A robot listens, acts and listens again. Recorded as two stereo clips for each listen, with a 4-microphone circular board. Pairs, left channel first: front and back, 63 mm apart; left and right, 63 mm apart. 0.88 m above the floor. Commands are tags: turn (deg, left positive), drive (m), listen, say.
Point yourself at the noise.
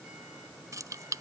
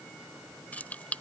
<turn deg="155"/>
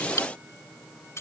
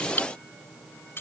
<turn deg="40"/>
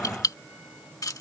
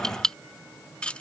<turn deg="20"/>
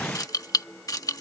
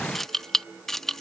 <say>Facing the keys jangling.</say>